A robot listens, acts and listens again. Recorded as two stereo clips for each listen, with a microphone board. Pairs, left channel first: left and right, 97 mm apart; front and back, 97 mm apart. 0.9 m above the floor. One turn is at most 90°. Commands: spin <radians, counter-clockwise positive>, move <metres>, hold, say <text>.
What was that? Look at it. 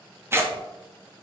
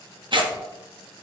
spin -1.57
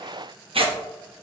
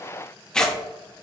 spin -1.40
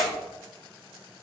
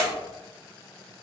hold
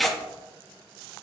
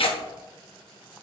say Facing the tearing paper, 1 to 2 m away.